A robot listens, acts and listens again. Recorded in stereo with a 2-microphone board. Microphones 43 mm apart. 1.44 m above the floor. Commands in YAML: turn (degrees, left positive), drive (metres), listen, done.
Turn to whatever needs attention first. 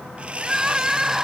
turn: -30
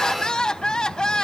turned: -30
turn: 20
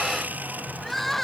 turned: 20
done: "Facing the crying."